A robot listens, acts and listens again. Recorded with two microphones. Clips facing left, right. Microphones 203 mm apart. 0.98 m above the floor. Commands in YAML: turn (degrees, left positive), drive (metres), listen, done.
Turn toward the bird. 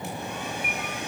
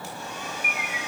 turn: -30
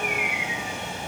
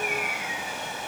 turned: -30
turn: -135
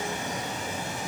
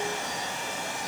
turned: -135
listen: true
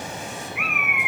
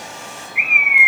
turn: -20
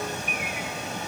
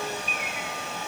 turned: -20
listen: true
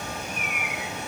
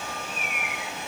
listen: true
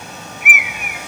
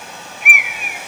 done: "Found it: a bird, straight ahead."